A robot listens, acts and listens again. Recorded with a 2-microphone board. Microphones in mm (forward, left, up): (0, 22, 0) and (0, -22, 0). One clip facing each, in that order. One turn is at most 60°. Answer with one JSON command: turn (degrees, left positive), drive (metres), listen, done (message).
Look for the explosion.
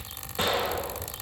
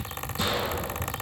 {"turn": 50}
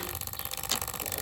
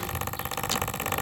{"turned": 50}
{"listen": true}
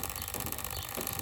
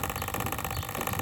{"done": "I heard an explosion, but can't make it out now. It was about straight ahead or 80° left."}